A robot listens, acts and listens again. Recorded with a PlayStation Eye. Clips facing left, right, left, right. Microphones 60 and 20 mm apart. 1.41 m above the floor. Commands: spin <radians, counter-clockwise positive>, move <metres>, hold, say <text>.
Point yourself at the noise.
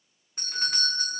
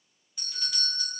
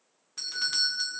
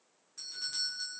spin 0.79
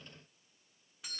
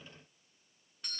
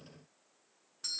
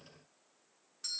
say Found it: a doorbell, straight ahead.